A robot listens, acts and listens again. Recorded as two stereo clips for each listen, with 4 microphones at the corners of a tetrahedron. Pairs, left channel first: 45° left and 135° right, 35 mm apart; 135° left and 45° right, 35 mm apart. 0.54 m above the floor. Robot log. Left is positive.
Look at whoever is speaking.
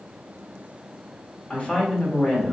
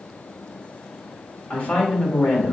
note: The woman speaking: 95° left.
cmd yaw +95
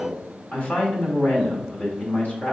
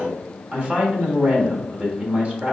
end: Found it: a woman speaking, straight ahead.